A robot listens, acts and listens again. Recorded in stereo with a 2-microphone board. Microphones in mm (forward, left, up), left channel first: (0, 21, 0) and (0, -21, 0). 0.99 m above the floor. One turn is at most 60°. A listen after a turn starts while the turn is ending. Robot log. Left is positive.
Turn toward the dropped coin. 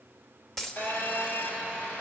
cmd yaw +30
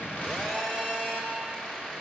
cmd idle
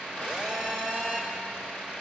end: I heard a dropped coin, but can't make it out now. It was about 20° right or 140° left.